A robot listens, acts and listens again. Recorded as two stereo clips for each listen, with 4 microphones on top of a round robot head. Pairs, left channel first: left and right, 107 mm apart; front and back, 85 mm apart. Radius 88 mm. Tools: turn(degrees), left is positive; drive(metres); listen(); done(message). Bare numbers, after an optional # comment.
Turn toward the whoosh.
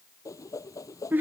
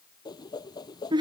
# The whoosh: 35° left.
turn(35)
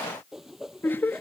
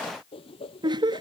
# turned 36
done("Found it: a whoosh, straight ahead.")